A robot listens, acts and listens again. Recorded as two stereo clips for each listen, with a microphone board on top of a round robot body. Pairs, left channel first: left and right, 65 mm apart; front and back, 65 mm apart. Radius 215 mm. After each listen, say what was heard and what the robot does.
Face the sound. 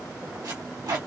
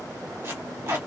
The tape being pulled: 125° right. Turn 125° right.
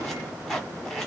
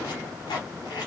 Facing the tape being pulled.